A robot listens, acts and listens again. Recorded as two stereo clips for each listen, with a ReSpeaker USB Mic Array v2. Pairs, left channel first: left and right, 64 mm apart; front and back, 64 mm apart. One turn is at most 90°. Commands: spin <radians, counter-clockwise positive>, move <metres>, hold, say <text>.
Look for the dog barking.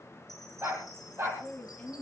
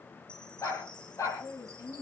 spin -0.70
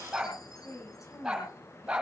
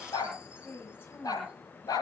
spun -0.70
spin -0.26
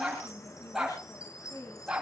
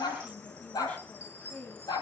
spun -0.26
spin -0.17
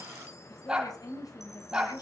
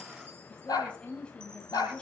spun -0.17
spin -0.17
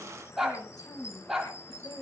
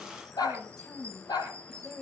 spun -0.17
say Found it: a dog barking, straight ahead, over 4 m away.